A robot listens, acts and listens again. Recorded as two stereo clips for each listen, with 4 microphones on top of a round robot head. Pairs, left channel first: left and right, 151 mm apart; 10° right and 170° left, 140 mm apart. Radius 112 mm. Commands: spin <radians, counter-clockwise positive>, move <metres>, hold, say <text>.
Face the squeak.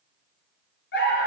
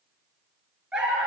hold
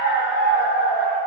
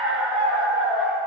hold
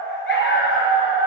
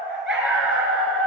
say I can't make out a squeak to turn to.